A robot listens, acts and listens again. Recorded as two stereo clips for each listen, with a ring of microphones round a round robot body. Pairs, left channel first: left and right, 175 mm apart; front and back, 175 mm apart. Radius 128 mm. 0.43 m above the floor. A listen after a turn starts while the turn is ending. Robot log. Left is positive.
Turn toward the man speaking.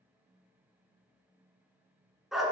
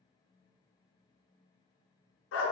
cmd idle
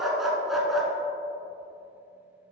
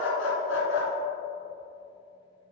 cmd idle
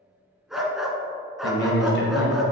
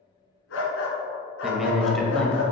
note: The man speaking: 85° left.
cmd yaw +85
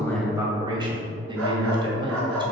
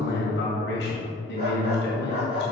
note: The man speaking is now 25° right.
cmd yaw -25
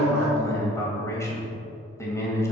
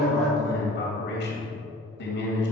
note: The man speaking is now 15° left.
cmd yaw +15
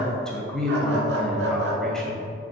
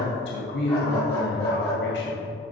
end: Facing the man speaking, 2 to 4 m away.